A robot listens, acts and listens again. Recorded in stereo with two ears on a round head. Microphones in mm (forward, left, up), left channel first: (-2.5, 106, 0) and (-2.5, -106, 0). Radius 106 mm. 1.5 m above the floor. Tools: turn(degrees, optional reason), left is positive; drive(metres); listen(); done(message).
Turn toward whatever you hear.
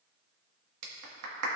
turn(degrees=-90)
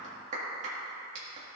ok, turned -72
turn(degrees=-30, reason="So it is at 30° right.")
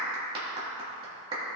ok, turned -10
turn(degrees=-20, reason="The clap is now 20° right.")
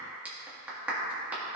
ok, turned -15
done("Facing the clap, 2 to 4 m away.")